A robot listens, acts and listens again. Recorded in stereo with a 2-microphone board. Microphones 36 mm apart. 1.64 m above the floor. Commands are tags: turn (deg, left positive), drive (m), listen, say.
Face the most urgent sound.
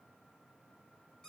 <listen/>
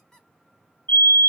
<turn deg="60"/>
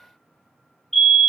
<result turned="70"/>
<turn deg="10"/>
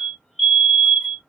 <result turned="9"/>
<say>Found it: a fire alarm, straight ahead.</say>